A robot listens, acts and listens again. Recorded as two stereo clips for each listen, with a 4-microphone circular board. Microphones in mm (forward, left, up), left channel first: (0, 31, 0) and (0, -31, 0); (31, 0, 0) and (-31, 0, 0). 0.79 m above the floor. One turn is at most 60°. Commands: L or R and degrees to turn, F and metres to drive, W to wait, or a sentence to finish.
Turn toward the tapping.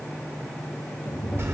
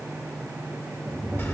L60
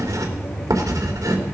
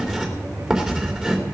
L60
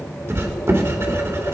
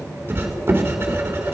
L35
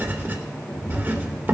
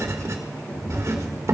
L25
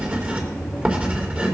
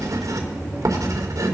L10
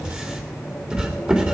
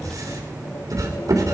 W
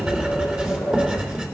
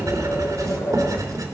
Facing the tapping.